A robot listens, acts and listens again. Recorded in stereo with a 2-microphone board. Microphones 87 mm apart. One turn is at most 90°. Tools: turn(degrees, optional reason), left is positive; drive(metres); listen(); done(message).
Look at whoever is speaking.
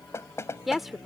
turn(degrees=-30)
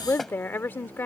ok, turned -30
turn(degrees=25, reason="So it is at 25° left.")
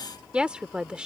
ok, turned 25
turn(degrees=-15, reason="The woman speaking is now 15° right.")
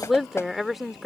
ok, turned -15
done("Found it: a woman speaking, straight ahead.")